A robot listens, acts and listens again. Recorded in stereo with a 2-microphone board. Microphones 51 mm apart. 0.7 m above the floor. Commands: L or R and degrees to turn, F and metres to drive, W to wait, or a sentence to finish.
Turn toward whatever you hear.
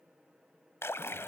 L55
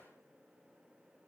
W
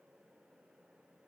I heard a splash, but can't make it out now. It was about straight ahead or 70° left.